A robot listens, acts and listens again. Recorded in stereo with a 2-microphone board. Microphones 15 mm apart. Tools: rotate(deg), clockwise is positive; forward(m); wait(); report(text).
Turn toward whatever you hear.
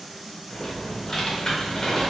rotate(-40)
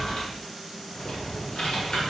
rotate(-95)
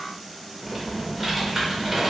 rotate(10)
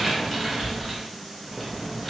report("Facing the typing on a keyboard, 1 to 2 m away.")